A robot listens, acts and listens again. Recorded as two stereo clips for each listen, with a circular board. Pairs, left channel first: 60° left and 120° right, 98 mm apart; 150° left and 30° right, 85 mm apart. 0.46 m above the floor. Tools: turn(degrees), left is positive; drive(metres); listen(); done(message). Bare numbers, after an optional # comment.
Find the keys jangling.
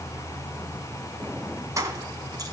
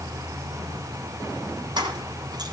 # The keys jangling: 65° right.
turn(-65)
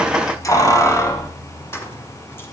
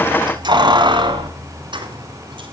done("Facing the keys jangling.")